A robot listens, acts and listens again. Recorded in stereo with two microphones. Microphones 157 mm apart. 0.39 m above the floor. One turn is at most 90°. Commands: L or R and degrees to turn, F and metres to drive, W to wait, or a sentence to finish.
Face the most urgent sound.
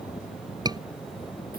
R25
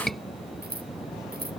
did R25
Facing the scream.